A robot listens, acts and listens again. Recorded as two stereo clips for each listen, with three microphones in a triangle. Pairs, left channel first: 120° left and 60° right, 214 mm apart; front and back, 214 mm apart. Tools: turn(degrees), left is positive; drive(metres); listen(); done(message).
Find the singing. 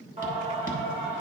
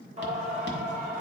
turn(degrees=-130)
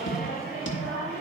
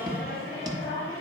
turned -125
turn(degrees=-20)
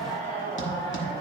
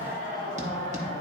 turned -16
turn(degrees=-10)
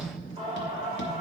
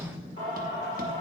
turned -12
done("Found it: singing, straight ahead, 2 to 4 m away.")